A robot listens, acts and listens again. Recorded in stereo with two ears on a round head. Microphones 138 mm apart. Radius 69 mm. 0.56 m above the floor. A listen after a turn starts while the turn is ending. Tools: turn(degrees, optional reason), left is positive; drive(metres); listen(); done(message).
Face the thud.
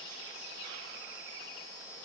listen()
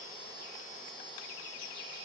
listen()
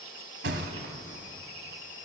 turn(degrees=-90)
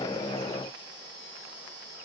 done("Facing where the thud came from. I can't hear it now.")